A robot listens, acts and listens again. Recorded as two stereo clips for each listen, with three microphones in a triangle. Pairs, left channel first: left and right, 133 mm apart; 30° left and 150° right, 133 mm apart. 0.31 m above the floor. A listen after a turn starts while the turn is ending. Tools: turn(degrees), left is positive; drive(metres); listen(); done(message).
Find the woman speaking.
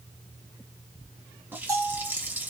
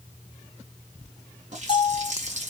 listen()
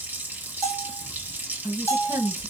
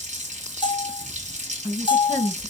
turn(degrees=-150)
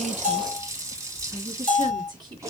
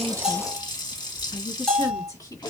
turn(degrees=-35)
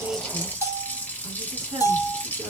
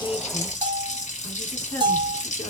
listen()
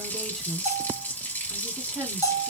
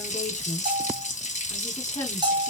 done("Found it: a woman speaking, straight ahead, 2 to 4 m away.")